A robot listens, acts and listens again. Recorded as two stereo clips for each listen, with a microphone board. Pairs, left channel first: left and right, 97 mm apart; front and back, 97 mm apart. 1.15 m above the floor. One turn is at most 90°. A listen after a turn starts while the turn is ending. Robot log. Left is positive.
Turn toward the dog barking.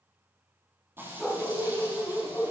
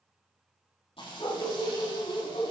note: The dog barking: 10° left.
cmd yaw +10
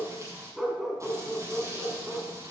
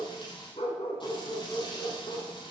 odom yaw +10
end: Facing the dog barking.